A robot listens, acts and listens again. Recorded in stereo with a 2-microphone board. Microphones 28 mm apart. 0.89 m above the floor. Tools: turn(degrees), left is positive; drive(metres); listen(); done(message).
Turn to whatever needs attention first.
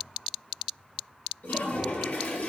listen()
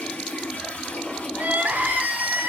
turn(degrees=-90)
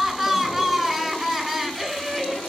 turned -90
done("Found it: crying, straight ahead.")